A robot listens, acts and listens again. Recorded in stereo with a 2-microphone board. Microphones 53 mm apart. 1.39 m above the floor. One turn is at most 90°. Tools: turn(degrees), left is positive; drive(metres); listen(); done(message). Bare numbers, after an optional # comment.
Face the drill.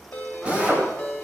# The drill: about 25° right or 155° right.
turn(-25)
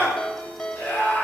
listen()
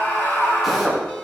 done("Found it: a drill, straight ahead.")